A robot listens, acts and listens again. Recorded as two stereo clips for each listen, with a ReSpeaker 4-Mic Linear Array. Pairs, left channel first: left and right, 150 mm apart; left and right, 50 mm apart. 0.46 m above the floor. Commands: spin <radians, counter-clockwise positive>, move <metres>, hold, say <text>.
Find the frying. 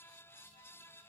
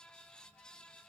hold
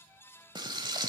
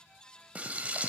spin -0.52
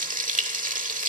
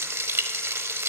spin -2.01
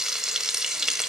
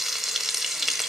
say Facing the frying, 1 to 2 m away.